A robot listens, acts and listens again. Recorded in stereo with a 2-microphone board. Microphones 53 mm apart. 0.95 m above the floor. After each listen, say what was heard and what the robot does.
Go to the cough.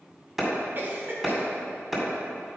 The cough: about 40° right or 140° right. Turn 40° right.
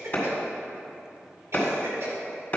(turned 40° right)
So it is at 95° right. Turn 95° right.
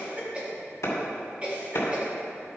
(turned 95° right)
The cough is now 30° right. Turn 30° right.
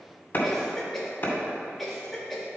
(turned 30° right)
Drive 1.0 m forward.
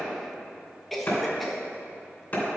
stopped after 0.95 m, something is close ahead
I am next to the cough.